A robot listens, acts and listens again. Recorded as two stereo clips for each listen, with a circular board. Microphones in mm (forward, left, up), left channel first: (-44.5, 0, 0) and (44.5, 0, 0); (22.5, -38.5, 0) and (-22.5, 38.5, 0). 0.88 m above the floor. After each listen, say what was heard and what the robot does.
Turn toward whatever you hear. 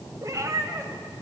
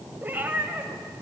The cat meowing: 50° left. Turn 50° left.
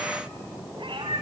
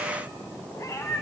The cat meowing is now 10° right. Turn 10° right.
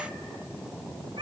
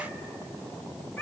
Facing the cat meowing, 2 to 4 m away.